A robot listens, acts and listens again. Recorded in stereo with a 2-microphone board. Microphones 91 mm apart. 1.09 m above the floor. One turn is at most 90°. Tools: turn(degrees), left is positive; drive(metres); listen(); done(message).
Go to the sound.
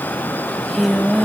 turn(degrees=30)
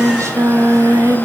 turn(degrees=-30)
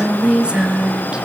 turn(degrees=-10)
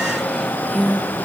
drive(metres=1.0)
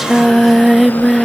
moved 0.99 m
drive(metres=1.0)
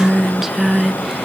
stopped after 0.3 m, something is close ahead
done("Arrived at the singing, straight ahead.")